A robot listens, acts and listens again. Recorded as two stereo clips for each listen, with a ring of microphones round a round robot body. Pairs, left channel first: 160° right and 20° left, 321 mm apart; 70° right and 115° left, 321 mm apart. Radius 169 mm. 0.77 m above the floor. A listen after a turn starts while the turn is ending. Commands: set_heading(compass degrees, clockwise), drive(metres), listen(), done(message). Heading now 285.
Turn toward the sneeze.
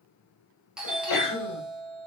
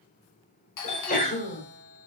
set_heading(60)
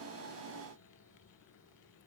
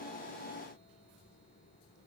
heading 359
set_heading(59)
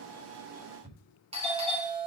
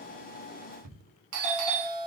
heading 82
set_heading(57)
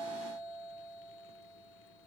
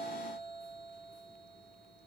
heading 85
set_heading(60)
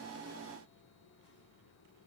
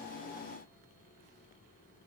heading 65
done("I heard a sneeze from this way, but can't make it out now.")